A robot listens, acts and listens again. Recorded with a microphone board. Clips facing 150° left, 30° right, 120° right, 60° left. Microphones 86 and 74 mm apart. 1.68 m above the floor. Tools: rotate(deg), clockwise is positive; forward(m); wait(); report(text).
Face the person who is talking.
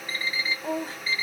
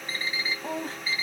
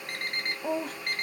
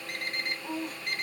rotate(125)
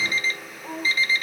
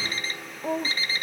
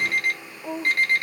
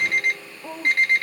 rotate(30)
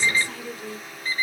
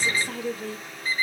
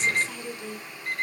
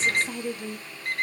rotate(-10)
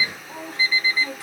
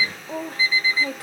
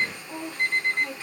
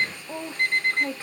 report("Found it: a woman speaking, straight ahead, 1 to 2 m away.")